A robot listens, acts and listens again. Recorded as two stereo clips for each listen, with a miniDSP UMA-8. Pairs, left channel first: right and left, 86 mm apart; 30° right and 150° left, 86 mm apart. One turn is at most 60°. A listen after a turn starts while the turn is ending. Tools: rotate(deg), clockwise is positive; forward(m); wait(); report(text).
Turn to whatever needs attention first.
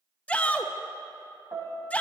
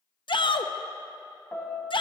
rotate(15)
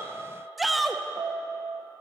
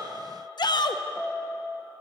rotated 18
report("Found it: a shout, straight ahead, under 1 m away.")